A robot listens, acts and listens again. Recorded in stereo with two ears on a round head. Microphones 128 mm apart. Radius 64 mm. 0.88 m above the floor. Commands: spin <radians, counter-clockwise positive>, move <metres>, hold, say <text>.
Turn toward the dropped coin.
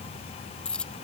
spin 0.52
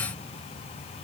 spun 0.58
hold
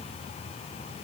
say I heard a dropped coin, but can't make it out now. It was about 25° right or 140° left.